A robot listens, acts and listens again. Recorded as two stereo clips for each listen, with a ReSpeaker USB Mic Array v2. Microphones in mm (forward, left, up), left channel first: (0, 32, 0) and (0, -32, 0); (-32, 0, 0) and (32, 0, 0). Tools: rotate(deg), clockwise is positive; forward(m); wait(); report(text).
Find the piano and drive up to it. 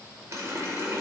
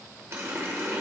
wait()
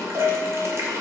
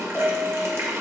rotate(100)
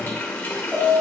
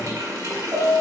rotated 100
rotate(25)
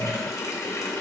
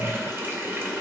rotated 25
wait()
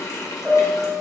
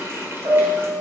forward(1.0)
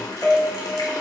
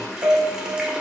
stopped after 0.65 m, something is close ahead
report("Something is in my way. I am facing the piano but have not reached it.")